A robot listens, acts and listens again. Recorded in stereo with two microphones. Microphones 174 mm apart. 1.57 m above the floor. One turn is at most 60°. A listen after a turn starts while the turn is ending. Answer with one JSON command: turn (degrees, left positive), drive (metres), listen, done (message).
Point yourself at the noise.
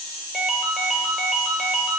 {"turn": 30}
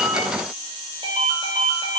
{"turn": -35}
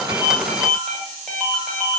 {"done": "Facing the ringtone."}